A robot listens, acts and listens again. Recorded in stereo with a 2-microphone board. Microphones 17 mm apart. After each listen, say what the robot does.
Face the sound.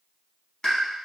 Turn 50° left.
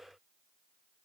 Keep listening.
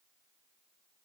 I heard a pop, but can't make it out now. It was about straight ahead or 80° left.